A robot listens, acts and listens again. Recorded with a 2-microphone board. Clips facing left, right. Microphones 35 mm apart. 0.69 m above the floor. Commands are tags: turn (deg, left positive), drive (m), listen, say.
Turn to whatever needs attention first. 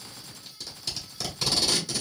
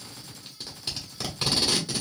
<listen/>
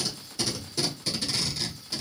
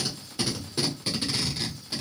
<listen/>
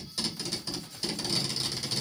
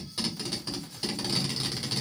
<say>I can't make out anything urgent to turn to.</say>